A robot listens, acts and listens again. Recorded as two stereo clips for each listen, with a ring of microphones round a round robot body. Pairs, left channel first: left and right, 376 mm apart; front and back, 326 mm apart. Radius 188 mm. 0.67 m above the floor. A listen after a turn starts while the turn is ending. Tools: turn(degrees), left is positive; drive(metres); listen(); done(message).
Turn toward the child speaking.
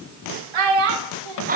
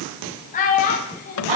turn(degrees=-70)
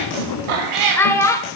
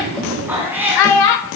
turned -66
turn(degrees=10)
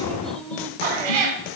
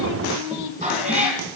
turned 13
done("Found it: a child speaking, straight ahead, 1 to 2 m away.")